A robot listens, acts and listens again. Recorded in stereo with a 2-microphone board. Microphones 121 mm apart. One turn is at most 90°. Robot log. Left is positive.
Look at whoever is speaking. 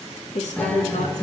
note: The woman speaking: about 75° left or 105° left.
cmd yaw +75
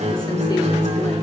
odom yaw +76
cmd idle
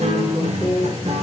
note: So it is at 30° left.
cmd yaw +30
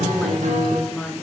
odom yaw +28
end: Facing the woman speaking, 2 to 4 m away.